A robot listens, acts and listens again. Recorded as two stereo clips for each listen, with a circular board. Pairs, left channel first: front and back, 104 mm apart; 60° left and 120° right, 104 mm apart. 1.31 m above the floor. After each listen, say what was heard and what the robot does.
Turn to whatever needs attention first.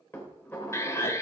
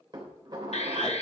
The alarm: 65° left. Turn 65° left.
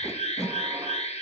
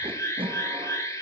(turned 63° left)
Facing the alarm, 1 to 2 m away.